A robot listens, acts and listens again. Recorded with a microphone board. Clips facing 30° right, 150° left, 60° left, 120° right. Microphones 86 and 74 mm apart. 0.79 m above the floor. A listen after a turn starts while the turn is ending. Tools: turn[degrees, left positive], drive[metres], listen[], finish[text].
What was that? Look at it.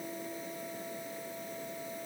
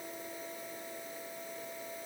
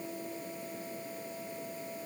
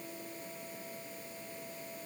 Action: listen[]
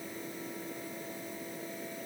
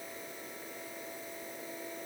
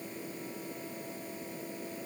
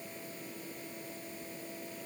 Action: listen[]
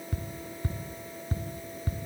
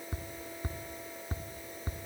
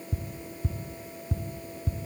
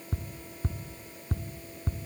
Thought: The ticking: 150° right.
Action: turn[-150]
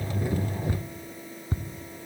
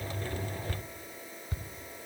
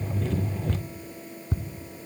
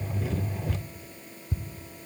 Thought: The ticking is now 25° left.
Action: turn[25]
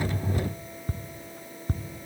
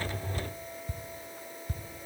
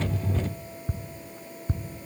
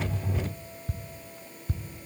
Action: finish[Facing the ticking.]